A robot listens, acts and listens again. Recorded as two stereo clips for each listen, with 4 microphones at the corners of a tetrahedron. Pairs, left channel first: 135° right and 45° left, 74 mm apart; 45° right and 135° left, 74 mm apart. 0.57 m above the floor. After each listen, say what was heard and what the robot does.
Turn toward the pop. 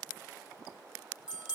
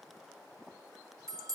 Keep listening.
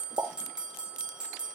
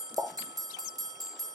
The pop: 85° left. Turn 85° left.
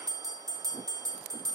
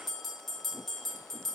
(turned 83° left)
Facing where the pop came from. I can't hear it now.